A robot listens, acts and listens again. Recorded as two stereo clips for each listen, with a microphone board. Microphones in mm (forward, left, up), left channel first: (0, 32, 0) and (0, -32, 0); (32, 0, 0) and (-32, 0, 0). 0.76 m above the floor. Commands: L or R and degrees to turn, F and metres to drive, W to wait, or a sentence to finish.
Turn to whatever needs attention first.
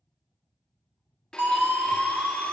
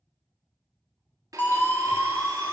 R45
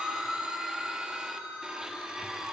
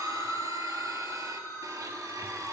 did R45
R25
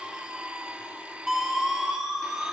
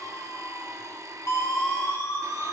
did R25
R10
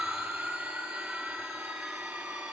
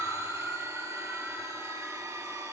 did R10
Found it: a siren, straight ahead.